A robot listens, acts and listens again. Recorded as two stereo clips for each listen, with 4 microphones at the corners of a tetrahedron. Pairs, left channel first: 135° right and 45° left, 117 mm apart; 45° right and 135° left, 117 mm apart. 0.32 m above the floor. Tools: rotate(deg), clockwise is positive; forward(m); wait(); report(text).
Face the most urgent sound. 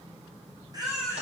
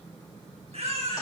rotate(-100)
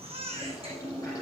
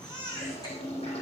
rotate(-10)
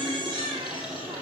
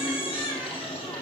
report("Found it: a baby crying, straight ahead.")